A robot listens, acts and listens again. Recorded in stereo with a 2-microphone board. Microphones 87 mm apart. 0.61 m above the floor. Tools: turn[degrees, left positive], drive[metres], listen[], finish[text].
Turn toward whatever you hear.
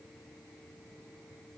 Action: listen[]
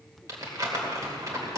Thought: The crumpling: about 40° right or 140° right.
Action: turn[-40]
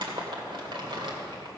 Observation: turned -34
Thought: So it is at 100° right.
Action: turn[-100]
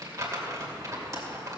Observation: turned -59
Thought: The crumpling is now 40° right.
Action: turn[-40]
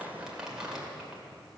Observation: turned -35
Thought: The crumpling is now 10° right.
Action: turn[-10]
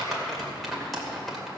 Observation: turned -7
Action: finish[Found it: crumpling, straight ahead, 2 to 4 m away.]